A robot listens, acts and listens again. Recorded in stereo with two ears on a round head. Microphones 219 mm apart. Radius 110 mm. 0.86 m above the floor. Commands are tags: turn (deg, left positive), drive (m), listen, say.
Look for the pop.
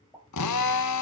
<turn deg="30"/>
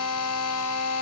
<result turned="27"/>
<listen/>
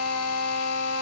<say>I heard a pop, but can't make it out now. It was about 20° right or 150° left.</say>